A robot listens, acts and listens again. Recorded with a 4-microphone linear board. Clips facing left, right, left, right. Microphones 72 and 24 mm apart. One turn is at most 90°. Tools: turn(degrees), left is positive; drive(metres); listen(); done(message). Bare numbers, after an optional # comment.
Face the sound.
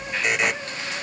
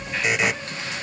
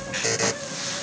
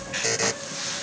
turn(30)
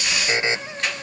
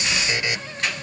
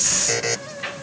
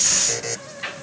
# So it is at 150° left.
turn(90)
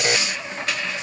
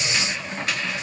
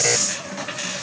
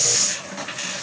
# Nothing new. It was at 60° left.
turn(60)
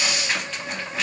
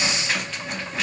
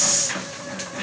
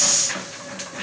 listen()
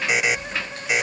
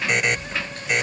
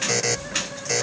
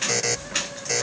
done("Facing the buzzer.")